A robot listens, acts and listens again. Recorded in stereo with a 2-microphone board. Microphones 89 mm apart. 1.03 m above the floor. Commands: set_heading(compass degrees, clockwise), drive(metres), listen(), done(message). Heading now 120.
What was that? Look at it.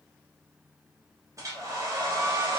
set_heading(155)
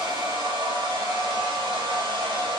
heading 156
set_heading(261)
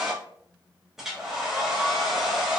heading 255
done("Found it: a hair dryer, straight ahead, 1 to 2 m away.")